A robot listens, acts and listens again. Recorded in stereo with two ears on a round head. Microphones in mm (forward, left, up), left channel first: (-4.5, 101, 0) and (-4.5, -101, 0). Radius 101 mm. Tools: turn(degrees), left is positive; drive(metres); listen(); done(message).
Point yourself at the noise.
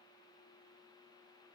listen()
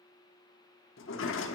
turn(degrees=60)
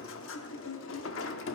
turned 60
turn(degrees=60)
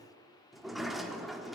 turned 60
done("Found it: a sliding door, straight ahead.")